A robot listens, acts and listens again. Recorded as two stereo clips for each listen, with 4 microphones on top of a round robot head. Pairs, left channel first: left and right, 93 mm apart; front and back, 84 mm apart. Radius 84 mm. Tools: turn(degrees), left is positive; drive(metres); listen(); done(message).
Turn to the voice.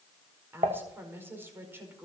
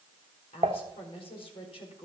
turn(degrees=-25)
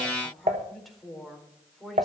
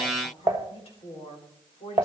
done("Facing the woman speaking.")